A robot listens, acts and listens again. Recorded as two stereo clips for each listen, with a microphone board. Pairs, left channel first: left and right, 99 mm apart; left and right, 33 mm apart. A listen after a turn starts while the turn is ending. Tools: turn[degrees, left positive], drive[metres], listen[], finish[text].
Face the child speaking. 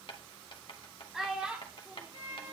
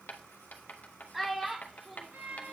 Thought: The child speaking: about 15° right or 165° right.
Action: turn[-15]
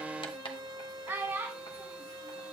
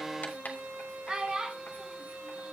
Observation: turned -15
Thought: The child speaking: about 25° right or 155° right.
Action: turn[-25]
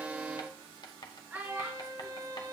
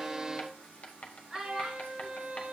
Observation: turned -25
Thought: The child speaking: about 15° right or 165° right.
Action: turn[-15]
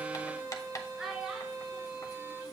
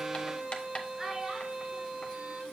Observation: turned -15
Action: turn[-30]
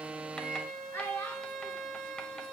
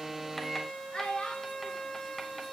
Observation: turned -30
Thought: So it is at 25° left.
Action: turn[25]
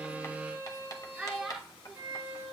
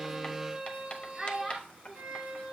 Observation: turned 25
Action: finish[Found it: a child speaking, straight ahead.]